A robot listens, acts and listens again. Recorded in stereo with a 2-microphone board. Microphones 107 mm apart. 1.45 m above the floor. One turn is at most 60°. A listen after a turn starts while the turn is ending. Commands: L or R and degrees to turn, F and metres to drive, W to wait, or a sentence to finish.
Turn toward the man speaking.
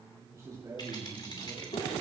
R30
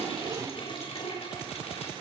W
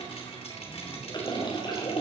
W
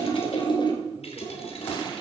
I heard a man speaking, but can't make it out now. It was about straight ahead or 120° right.